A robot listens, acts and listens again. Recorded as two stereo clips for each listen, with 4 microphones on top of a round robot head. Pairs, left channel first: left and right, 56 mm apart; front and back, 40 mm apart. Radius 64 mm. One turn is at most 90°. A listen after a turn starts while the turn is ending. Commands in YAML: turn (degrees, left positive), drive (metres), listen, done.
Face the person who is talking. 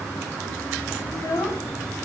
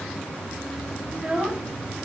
turn: 90
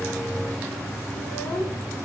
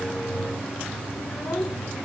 turn: 30
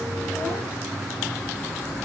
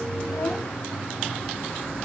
listen: true
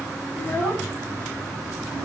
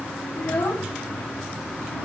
turn: 10
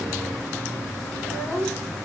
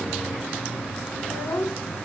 done: "Found it: a child speaking, straight ahead."